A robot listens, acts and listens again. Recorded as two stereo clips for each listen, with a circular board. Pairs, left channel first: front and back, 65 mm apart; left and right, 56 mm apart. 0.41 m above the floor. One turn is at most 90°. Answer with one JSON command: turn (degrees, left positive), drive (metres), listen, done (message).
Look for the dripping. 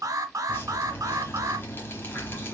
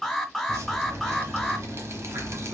{"turn": -55}
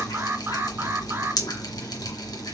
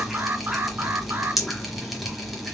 {"done": "Found it: dripping, straight ahead."}